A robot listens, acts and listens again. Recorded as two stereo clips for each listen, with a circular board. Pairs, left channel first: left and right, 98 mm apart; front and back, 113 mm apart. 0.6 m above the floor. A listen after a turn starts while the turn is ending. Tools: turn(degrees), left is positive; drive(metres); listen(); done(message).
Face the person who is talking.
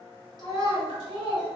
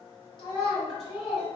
turn(degrees=-55)
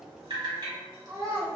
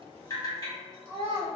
turn(degrees=-45)
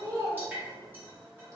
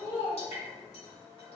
turn(degrees=-40)
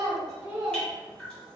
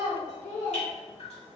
turn(degrees=-20)
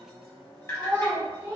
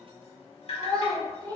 turn(degrees=-25)
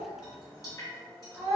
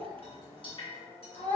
turn(degrees=-10)
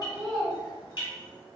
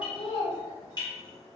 done("Facing the child speaking.")